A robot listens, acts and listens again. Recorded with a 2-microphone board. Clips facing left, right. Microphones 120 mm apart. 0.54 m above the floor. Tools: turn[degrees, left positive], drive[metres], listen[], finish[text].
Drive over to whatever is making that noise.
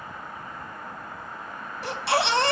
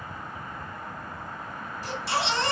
Action: turn[90]
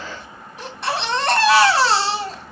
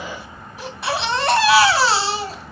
Action: drive[1.0]
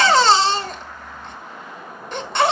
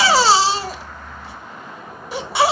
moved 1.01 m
Action: drive[1.0]
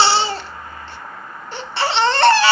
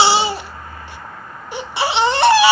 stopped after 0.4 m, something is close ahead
Thought: The baby crying is now 15° right.
Action: turn[-15]
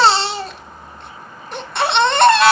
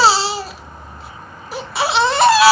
Action: finish[I am next to the baby crying.]